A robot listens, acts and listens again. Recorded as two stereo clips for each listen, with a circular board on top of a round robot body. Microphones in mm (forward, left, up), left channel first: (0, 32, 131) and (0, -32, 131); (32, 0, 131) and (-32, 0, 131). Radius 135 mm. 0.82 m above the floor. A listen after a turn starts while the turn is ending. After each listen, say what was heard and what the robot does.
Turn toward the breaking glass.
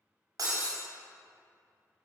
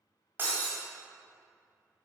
The breaking glass: 120° right. Turn 120° right.
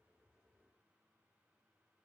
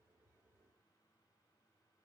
Facing where the breaking glass came from. I can't hear it now.